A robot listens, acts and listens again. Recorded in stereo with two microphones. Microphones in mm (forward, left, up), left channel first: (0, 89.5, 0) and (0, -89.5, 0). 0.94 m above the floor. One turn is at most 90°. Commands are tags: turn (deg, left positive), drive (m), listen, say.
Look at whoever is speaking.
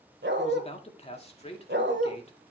<turn deg="35"/>
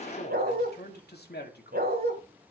<turn deg="90"/>
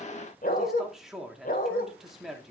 <say>Found it: a man speaking, straight ahead, 2 to 4 m away.</say>